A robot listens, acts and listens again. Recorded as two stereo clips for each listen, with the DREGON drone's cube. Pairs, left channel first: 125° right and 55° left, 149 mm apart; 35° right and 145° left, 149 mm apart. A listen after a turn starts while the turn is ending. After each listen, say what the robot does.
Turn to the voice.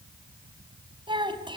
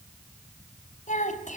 Facing the child speaking.